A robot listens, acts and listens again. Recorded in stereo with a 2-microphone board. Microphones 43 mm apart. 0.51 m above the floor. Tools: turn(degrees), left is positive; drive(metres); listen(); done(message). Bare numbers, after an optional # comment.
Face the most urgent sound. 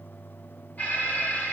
# The alarm: about 40° left or 140° left.
turn(40)
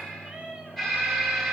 # So it is at 10° left.
turn(10)
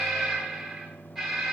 done("Facing the alarm, 2 to 4 m away.")